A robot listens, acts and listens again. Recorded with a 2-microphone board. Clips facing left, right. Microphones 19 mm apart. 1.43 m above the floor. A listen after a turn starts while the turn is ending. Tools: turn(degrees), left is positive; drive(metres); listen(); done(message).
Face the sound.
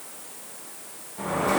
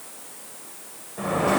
turn(degrees=-45)
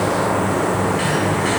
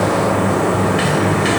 turn(degrees=-75)
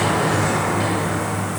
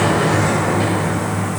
done("Found it: a sliding door, straight ahead.")